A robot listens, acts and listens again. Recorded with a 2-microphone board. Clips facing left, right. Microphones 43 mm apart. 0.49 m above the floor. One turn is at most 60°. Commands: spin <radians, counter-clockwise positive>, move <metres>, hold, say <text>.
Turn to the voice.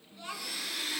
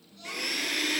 spin 0.35
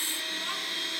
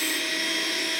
hold
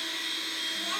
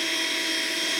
hold
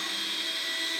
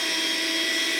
say I heard a child speaking, but can't make it out now. It was about straight ahead or 140° left.